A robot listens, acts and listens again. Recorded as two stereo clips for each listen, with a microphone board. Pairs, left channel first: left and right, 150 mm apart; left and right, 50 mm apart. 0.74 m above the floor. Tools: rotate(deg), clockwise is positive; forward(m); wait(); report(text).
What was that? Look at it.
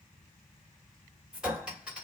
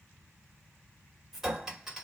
rotate(30)
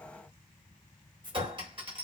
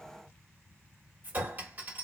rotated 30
rotate(145)
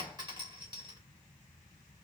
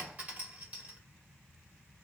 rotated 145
rotate(30)
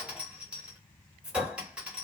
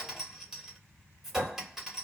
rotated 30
report("Found it: a clink, straight ahead, 1 to 2 m away.")